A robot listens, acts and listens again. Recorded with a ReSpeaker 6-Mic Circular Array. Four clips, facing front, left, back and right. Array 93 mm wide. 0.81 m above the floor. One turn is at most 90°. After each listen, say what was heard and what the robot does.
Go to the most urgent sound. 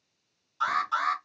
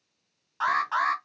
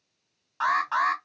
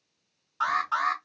The alarm: 155° left. Turn 90° left.
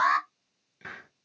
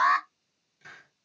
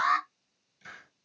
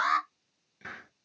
The alarm is now 60° left. Turn 60° left.
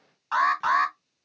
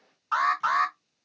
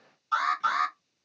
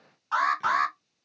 Drive 1.0 m forward.
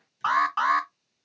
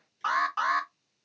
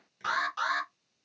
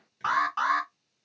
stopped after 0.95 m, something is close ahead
Arrived at the alarm, straight ahead.